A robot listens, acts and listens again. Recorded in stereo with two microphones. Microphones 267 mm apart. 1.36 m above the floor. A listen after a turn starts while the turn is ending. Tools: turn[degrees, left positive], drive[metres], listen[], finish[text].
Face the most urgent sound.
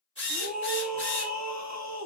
Action: turn[-90]
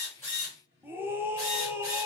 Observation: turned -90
Thought: So it is at 10° right.
Action: turn[-10]
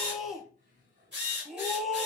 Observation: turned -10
Action: finish[Facing the scream, under 1 m away.]